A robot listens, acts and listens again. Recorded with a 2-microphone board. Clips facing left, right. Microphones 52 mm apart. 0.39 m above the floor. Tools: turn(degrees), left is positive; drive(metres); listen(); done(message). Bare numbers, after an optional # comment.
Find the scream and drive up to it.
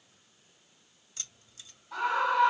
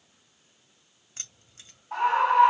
# The scream: about 45° right or 135° right.
turn(-45)
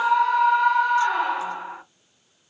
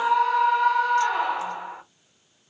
drive(1.0)
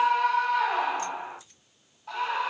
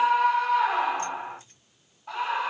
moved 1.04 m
# The scream is now 15° right.
turn(-15)
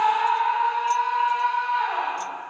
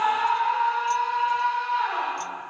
drive(1.0)
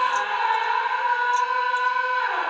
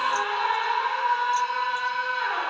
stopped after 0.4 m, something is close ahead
done("I am next to the scream.")